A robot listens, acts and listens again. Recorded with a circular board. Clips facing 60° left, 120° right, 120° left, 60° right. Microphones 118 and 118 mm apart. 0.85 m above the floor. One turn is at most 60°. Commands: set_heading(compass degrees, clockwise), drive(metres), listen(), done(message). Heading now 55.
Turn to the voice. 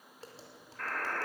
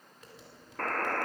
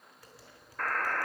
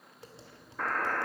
listen()
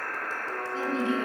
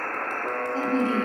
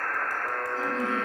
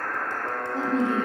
set_heading(115)
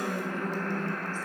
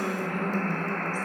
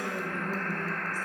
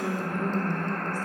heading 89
set_heading(129)
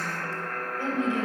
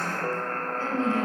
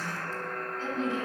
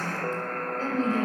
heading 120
set_heading(135)
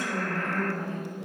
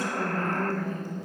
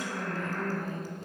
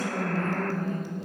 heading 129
set_heading(139)
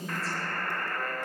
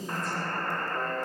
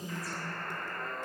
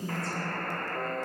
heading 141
done("Found it: a woman speaking, straight ahead, over 4 m away.")